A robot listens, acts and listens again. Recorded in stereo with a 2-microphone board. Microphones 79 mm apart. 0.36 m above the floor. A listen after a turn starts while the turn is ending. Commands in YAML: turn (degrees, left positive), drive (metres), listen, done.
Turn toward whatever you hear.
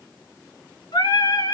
turn: 75
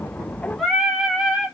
done: "Facing the singing, 1 to 2 m away."